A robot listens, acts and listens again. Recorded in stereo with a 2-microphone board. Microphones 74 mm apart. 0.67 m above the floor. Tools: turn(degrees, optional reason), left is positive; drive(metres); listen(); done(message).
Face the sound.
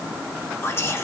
turn(degrees=35, reason="The whispering: about 35° left or 145° left.")
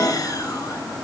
turn(degrees=105, reason="So it is at 105° left.")
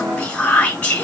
turn(degrees=20, reason="The whispering is now 20° left.")
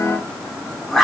done("Facing the whispering, under 1 m away.")